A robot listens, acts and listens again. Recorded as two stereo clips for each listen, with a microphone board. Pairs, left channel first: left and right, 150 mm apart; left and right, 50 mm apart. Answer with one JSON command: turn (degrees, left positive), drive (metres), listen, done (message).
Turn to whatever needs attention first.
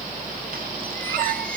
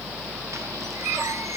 {"listen": true}
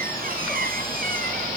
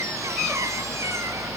{"listen": true}
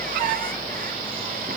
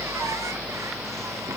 {"done": "I can't make out anything urgent to turn to."}